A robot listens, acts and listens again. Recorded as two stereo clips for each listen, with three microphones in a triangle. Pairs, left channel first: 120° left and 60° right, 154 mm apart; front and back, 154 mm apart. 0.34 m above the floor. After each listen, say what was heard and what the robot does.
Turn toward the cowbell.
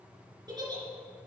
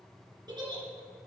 Keep listening.
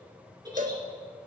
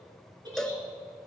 The cowbell: 85° right. Turn 85° right.
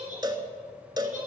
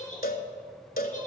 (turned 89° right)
Found it: a cowbell, straight ahead, under 1 m away.